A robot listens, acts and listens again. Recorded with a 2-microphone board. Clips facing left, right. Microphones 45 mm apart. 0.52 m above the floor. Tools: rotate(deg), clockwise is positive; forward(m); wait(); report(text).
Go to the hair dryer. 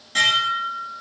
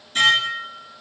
wait()
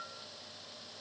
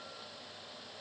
wait()
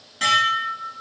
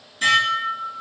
report("I can't make out a hair dryer, only dishes clattering.")